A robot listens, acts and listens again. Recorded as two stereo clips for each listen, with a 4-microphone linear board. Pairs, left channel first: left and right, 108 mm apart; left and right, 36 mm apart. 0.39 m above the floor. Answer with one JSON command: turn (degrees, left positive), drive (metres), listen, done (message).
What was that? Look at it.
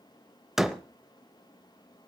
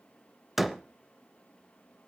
{"turn": -30}
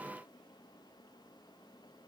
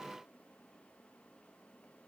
{"listen": true}
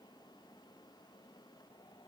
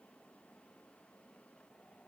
{"done": "I heard a door slam, but can't make it out now. It was about 25° left or 145° right."}